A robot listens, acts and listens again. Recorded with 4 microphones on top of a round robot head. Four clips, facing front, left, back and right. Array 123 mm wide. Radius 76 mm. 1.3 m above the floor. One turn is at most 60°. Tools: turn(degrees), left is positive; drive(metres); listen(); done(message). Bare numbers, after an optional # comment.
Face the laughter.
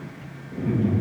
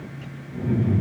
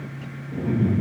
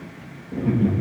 # The laughter: 95° right.
turn(-60)
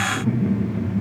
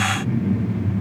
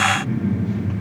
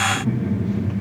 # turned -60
# The laughter is now 20° right.
turn(-20)
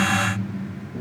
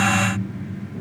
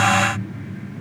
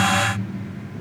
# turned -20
# The laughter is now 10° left.
turn(10)
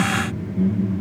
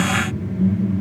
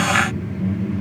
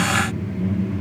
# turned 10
# The laughter is now 15° left.
turn(15)
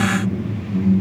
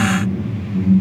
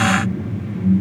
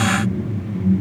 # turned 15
# The laughter is now 15° left.
turn(15)
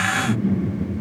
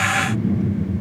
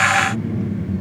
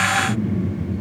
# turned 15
done("Facing the laughter.")